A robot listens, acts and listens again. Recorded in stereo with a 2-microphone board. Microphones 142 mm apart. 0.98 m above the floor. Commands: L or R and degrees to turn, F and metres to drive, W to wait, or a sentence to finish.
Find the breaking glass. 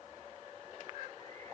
W
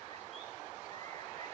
W
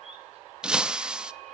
R30
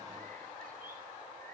W
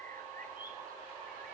I heard breaking glass, but can't make it out now. It was about 25° left or 145° right.